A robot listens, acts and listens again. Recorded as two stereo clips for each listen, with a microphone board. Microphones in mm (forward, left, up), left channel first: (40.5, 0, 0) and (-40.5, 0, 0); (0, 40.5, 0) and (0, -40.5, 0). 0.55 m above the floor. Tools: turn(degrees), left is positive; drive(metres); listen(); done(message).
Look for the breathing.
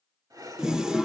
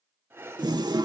turn(degrees=-150)
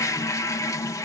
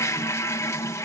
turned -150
listen()
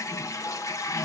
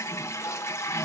listen()
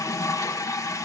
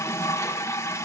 done("Facing where the breathing came from. I can't hear it now.")